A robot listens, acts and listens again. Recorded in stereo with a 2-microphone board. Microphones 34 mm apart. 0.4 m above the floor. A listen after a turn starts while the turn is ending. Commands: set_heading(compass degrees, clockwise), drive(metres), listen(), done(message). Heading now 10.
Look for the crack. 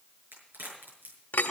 set_heading(100)
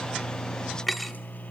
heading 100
done("I heard a crack from this way, but can't make it out now.")